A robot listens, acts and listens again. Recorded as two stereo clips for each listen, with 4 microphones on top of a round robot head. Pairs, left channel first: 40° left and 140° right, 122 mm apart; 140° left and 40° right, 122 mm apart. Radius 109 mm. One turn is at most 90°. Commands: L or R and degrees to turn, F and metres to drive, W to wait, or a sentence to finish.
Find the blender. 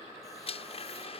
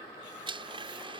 Facing the blender.